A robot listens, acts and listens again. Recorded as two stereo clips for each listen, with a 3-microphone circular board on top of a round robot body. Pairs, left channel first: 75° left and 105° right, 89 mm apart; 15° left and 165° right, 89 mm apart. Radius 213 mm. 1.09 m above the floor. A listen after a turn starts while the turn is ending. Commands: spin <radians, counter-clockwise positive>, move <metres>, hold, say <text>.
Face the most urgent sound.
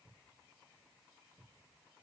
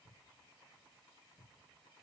hold
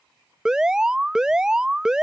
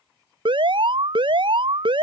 spin 3.05
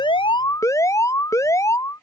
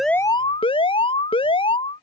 spin 0.35
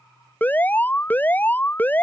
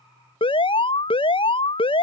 say Found it: an alarm, straight ahead.